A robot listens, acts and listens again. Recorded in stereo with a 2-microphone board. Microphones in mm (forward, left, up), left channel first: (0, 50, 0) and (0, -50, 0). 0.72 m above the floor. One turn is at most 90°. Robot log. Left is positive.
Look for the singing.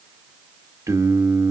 note: The singing: about 25° right or 155° right.
cmd yaw -25
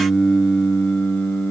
note: So it is at 20° left.
cmd yaw +20
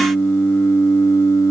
note: The singing is now 35° left.
cmd yaw +35
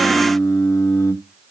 note: The singing is now 35° left.
cmd yaw +35
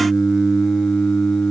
end: Found it: singing, straight ahead.